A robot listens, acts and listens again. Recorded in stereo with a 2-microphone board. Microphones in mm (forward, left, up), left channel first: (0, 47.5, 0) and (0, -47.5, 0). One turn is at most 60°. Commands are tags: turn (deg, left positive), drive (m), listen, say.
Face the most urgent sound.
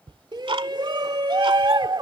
<turn deg="-55"/>
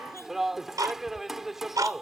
<say>Facing the shout.</say>